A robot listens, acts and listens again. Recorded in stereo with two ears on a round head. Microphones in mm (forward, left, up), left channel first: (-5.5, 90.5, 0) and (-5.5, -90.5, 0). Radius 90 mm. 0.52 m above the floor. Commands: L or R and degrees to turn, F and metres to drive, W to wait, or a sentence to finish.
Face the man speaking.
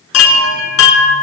W
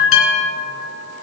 W
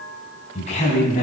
L35
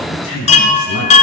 L105
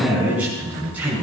Facing the man speaking.